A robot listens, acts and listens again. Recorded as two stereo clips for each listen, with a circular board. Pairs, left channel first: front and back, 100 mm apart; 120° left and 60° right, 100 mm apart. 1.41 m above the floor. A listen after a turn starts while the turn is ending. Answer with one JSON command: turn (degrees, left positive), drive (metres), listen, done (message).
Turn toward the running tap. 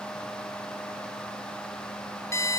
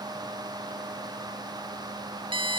{"listen": true}
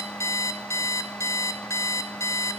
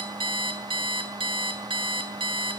{"listen": true}
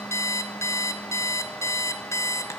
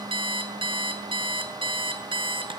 {"done": "I can't make out a running tap, only an alarm clock."}